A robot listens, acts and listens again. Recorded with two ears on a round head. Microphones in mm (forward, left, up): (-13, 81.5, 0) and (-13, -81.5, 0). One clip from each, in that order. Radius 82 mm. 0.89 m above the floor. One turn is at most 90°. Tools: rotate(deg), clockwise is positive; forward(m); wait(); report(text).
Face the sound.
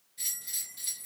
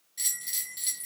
rotate(50)
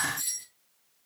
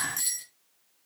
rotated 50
rotate(80)
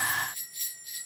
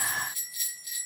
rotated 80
rotate(20)
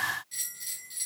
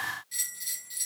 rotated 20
report("Facing the bell.")